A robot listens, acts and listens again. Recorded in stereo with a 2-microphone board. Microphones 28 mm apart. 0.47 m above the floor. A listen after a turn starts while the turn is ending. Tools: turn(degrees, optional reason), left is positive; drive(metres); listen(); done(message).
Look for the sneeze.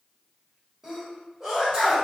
turn(degrees=-20, reason="The sneeze: about 20° right or 160° right.")
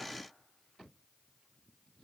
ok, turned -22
listen()
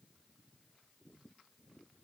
done("I heard a sneeze, but can't make it out now. It was about 5° left or 140° right.")